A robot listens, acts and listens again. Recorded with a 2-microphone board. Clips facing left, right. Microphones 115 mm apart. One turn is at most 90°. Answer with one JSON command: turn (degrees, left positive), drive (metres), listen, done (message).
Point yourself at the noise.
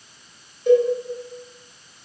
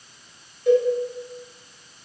{"turn": 30}
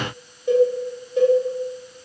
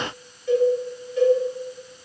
{"turn": 90}
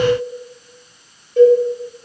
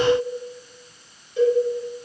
{"turn": 60}
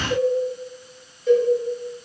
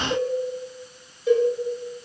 {"turn": -10}
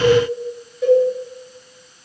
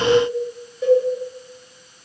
{"done": "Found it: a cowbell, straight ahead."}